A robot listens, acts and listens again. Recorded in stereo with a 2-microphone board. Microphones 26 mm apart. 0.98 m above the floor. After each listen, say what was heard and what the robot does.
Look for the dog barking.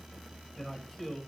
Keep listening.
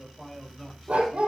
The dog barking: about 55° right or 125° right. Turn 55° right.
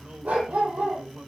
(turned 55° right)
So it is at 70° right. Turn 70° right.
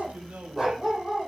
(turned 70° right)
The dog barking is now 10° right. Turn 10° right.
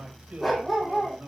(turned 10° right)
Found it: a dog barking, straight ahead, over 4 m away.